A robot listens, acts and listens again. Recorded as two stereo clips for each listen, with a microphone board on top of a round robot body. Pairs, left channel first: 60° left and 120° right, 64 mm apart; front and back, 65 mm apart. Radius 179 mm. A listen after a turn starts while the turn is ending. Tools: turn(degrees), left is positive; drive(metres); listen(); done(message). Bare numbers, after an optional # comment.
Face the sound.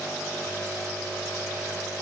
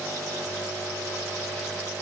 listen()
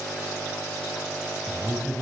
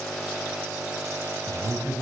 # The man speaking: 150° left.
turn(150)
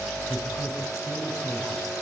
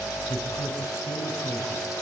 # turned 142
listen()
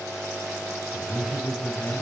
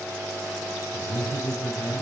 # The man speaking is now 20° left.
turn(20)
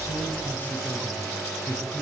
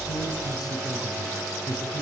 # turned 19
done("Found it: a man speaking, straight ahead.")